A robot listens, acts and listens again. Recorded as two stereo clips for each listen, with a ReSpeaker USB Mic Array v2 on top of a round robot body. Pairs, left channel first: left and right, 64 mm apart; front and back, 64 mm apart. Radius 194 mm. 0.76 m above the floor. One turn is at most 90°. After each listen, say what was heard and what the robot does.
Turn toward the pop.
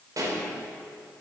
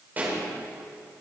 The pop: 115° right. Turn 90° right.
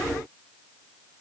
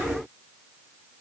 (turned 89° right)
Nothing new. It was at 30° right. Turn 30° right.
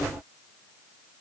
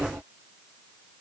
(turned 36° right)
Nothing new. It was at 10° left. Turn 10° left.
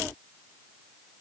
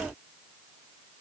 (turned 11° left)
Facing where the pop came from. I can't hear it now.